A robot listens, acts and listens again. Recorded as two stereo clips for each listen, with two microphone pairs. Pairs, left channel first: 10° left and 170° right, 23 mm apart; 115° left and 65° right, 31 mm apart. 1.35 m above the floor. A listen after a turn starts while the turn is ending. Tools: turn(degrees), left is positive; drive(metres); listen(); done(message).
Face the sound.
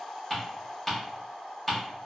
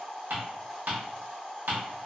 turn(degrees=-75)
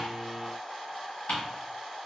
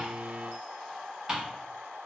done("Facing the ticking, 1 to 2 m away.")